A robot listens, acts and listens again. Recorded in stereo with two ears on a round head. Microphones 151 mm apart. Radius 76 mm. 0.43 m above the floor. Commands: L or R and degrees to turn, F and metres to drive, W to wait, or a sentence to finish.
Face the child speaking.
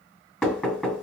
W
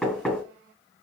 W
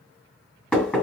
I can't make out a child speaking, only knocking.